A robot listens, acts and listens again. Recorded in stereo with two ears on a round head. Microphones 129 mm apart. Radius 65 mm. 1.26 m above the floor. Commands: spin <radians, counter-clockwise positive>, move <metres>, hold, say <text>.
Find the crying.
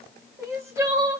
spin -0.35
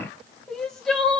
say Facing the crying.